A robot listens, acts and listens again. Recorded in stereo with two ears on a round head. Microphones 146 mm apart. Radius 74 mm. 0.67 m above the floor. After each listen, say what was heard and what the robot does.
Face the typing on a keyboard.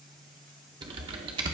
The typing on a keyboard: about 30° right or 150° right. Turn 30° right.
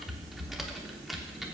Found it: typing on a keyboard, straight ahead, under 1 m away.